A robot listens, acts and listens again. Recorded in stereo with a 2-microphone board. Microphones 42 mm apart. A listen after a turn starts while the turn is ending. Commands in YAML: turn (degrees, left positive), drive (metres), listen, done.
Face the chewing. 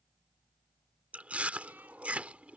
turn: -35
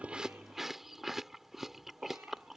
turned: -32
turn: -10
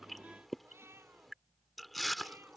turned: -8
done: "Facing the chewing."